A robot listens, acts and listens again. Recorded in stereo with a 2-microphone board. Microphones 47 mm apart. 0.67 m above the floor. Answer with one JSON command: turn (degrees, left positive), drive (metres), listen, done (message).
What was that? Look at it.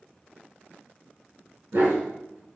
{"turn": -75}
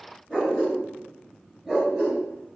{"done": "Found it: a dog barking, straight ahead, 2 to 4 m away."}